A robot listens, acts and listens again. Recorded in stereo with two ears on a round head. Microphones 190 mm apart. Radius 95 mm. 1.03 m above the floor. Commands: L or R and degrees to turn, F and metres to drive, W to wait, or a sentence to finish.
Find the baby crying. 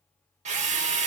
W
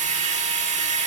W
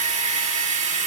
I can't make out a baby crying to turn to.